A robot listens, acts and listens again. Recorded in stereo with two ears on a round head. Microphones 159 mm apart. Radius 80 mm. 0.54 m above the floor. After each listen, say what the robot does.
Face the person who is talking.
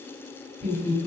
Turn 30° right.
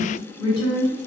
Turn 30° left.
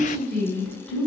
Facing the woman speaking, 1 to 2 m away.